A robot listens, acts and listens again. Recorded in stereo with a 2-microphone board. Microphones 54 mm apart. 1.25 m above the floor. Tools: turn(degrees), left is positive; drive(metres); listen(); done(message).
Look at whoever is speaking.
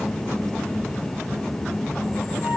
listen()
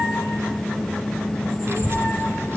turn(degrees=-50)
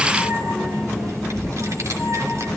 turn(degrees=-75)
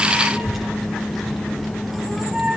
done("Facing the child speaking.")